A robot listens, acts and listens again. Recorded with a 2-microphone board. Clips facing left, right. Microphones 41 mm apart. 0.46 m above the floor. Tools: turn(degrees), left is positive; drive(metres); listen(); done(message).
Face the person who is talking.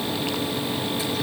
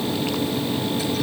listen()
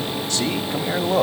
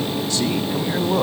turn(degrees=65)
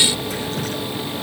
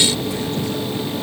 listen()
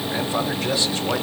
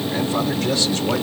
turn(degrees=20)
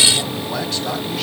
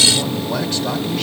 listen()
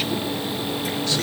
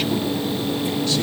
listen()
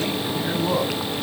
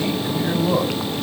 done("Found it: a man speaking, straight ahead, 2 to 4 m away.")